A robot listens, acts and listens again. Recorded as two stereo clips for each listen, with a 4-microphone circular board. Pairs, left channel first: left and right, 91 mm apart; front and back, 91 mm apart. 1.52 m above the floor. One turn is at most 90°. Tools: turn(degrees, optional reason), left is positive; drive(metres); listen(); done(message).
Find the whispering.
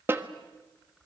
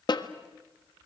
listen()
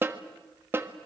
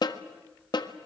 listen()
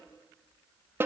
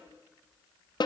done("I can't make out whispering to turn to.")